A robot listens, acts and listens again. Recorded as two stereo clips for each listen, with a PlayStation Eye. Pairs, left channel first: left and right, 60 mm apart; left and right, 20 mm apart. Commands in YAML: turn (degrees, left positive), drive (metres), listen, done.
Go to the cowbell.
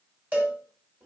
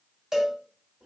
turn: -35
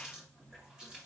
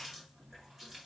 listen: true
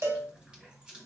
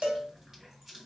turn: -105
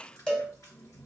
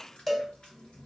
turn: 15
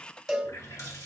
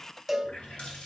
drive: 1.0
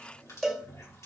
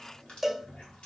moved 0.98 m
drive: 1.0
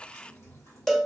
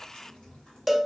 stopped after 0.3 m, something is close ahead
done: "I am next to the cowbell."